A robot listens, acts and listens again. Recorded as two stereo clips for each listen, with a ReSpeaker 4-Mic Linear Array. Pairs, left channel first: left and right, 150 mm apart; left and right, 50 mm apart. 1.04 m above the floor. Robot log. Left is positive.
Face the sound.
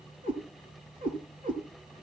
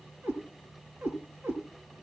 note: The cat meowing: about 60° right or 120° right.
cmd yaw -60
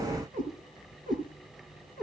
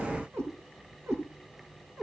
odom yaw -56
note: So it is at 70° right.
cmd yaw -70
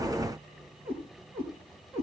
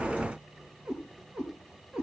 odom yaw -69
note: The cat meowing is now 20° right.
cmd yaw -20
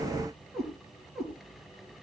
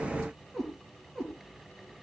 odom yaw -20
end: Found it: a cat meowing, straight ahead.